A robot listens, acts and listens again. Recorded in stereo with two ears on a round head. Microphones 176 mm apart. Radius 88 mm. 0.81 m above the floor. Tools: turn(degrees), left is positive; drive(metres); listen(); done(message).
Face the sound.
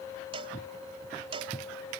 turn(degrees=-30)
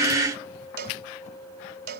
turn(degrees=-120)
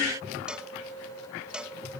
done("Found it: a cowbell, straight ahead.")